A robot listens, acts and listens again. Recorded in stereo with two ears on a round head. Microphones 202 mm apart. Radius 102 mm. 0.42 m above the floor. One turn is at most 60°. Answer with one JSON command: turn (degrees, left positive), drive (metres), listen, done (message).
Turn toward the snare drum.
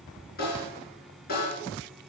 {"turn": 40}
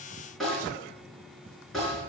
{"done": "Facing the snare drum."}